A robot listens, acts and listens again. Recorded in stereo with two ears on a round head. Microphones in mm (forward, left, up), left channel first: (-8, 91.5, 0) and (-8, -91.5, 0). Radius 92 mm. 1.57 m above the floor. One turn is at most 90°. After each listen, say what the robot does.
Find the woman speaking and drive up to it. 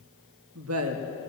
Turn 90° right.
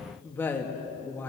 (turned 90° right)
Turn 10° left.
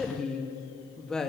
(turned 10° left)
Drive 1.0 m forward.
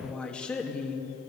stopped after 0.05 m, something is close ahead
Blocked. The woman speaking is further on, straight ahead.